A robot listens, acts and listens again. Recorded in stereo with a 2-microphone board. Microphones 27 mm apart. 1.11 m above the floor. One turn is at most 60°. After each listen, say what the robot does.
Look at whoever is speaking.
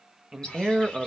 Turn 30° right.
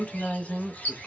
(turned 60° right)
Turn 50° left.
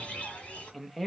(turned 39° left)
Turn 10° left.
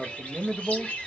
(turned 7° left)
Found it: a man speaking, straight ahead, under 1 m away.